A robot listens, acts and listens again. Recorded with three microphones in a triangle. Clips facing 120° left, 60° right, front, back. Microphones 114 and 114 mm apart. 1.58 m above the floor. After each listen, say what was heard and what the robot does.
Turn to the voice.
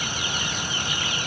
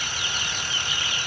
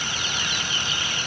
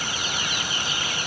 Keep listening.
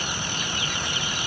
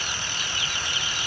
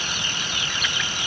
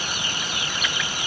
Keep listening.
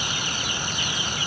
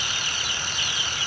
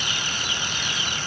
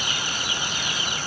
I can't make out anyone speaking.